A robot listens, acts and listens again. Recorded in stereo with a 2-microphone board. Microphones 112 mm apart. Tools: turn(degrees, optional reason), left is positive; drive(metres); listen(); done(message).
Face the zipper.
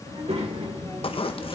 turn(degrees=55, reason="The zipper: about 55° left or 125° left.")
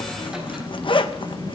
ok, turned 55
turn(degrees=60, reason="So it is at 60° left.")
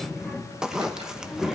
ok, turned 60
done("Found it: a zipper, straight ahead, under 1 m away.")